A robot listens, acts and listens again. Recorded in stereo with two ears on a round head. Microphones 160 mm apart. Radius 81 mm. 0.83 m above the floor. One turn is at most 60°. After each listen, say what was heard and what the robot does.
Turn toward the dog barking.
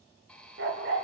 The dog barking: about 70° right or 110° right. Turn 60° right.
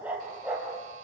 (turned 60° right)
Facing the dog barking.